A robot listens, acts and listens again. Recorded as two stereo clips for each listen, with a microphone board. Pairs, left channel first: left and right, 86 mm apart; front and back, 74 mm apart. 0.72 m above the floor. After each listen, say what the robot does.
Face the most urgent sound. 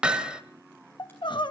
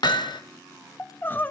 Turn 65° left.
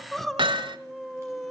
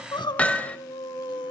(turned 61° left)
Facing the crying, under 1 m away.